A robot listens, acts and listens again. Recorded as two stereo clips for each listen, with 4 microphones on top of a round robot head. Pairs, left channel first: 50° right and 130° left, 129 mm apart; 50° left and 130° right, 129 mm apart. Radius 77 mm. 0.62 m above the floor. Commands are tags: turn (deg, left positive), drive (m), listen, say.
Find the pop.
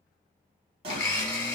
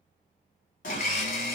<turn deg="80"/>
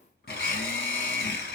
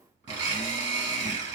<say>I heard a pop from this way, but can't make it out now.</say>